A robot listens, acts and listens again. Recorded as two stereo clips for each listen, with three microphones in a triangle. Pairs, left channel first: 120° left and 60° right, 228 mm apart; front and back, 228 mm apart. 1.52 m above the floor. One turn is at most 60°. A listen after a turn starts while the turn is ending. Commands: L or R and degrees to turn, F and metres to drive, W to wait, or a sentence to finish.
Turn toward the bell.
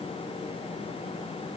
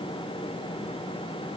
W
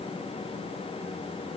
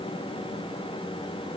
W
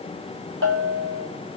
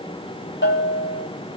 R35
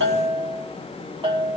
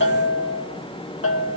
Facing the bell, 2 to 4 m away.